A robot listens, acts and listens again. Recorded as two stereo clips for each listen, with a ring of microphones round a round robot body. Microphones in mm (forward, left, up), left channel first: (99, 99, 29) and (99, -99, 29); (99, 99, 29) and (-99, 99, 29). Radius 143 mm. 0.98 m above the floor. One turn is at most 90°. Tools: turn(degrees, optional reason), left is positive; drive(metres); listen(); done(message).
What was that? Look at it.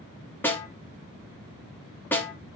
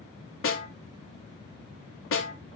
turn(degrees=10, reason="The snare drum: 10° left.")
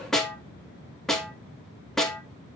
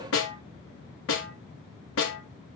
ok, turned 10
done("Facing the snare drum.")